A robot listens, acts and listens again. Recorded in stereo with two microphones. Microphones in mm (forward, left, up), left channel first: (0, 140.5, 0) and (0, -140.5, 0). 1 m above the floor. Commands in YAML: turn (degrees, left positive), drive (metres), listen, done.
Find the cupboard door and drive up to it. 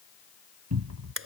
turn: -70
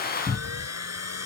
drive: 1.0
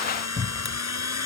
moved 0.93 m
drive: 1.0
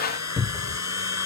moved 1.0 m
drive: 1.0
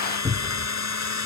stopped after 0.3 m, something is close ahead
turn: -10
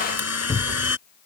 done: "Arrived at the cupboard door, straight ahead."